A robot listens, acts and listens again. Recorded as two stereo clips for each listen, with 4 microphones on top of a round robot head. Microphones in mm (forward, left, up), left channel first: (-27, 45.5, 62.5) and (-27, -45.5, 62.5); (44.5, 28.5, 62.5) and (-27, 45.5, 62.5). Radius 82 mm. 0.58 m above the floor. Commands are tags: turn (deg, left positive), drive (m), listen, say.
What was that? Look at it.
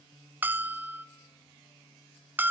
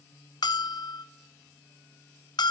<turn deg="-20"/>
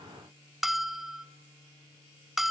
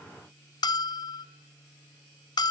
<say>Found it: a bell, straight ahead, under 1 m away.</say>